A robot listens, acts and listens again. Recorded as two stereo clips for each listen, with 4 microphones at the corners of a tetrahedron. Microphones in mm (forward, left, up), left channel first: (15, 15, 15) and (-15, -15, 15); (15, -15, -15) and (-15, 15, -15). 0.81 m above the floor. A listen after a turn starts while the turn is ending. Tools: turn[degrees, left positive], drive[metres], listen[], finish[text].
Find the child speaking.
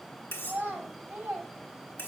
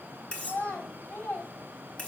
Thought: The child speaking: 80° right.
Action: turn[-80]
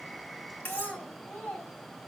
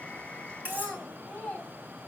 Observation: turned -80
Thought: The child speaking is now 10° left.
Action: turn[10]
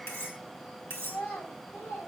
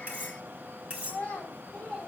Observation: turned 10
Thought: The child speaking is now 10° left.
Action: turn[10]
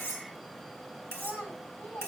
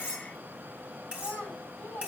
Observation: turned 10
Action: finish[Facing the child speaking, over 4 m away.]